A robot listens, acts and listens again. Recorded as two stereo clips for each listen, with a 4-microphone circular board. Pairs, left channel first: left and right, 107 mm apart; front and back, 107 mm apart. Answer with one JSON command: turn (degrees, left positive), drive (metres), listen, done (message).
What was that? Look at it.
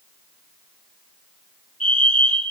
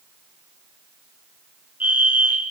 {"turn": -105}
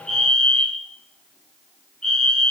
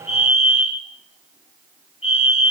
{"done": "Facing the fire alarm."}